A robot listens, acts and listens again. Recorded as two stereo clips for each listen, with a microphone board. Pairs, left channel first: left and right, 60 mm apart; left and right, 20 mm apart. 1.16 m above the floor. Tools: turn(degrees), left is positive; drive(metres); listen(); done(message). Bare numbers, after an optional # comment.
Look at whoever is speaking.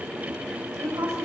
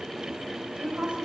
# The woman speaking: about 50° right or 130° right.
turn(-50)
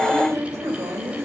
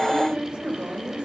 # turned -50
# So it is at 80° right.
turn(-80)
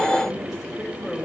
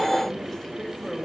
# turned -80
done("Found it: a woman speaking, straight ahead.")